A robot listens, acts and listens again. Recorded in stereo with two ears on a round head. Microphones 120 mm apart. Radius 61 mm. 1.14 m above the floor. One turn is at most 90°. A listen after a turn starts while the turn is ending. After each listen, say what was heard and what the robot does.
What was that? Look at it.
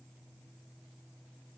Keep listening.
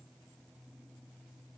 Keep listening.
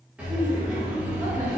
Turn 30° right.
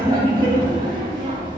So it is at 140° right. Turn 90° right.
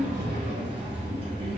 The laughter is now 40° right. Turn 40° right.
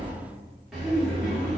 Facing the laughter, 1 to 2 m away.